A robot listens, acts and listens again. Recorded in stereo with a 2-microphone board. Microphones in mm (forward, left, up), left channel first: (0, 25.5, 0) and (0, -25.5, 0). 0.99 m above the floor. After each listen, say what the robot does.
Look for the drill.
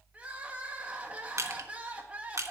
Keep listening.
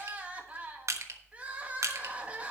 Keep listening.
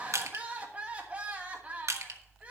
I can't make out a drill to turn to.